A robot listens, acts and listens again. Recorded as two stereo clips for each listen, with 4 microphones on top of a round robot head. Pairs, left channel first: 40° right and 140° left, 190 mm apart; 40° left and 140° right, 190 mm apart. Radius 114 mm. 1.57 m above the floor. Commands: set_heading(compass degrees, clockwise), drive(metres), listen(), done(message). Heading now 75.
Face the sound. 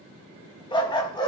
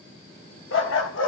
set_heading(50)
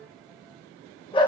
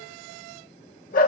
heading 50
set_heading(35)
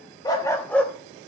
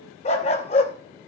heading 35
set_heading(355)
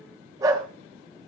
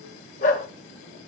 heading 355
set_heading(280)
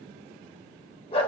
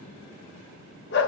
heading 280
set_heading(265)
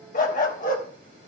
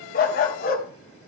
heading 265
done("Facing the dog barking.")